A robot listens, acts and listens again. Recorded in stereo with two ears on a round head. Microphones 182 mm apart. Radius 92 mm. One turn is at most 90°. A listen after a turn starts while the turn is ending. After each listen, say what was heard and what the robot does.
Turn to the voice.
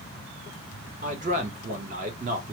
The man speaking: about 35° right or 145° right. Turn 35° right.
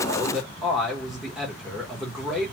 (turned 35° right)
Found it: a man speaking, straight ahead, under 1 m away.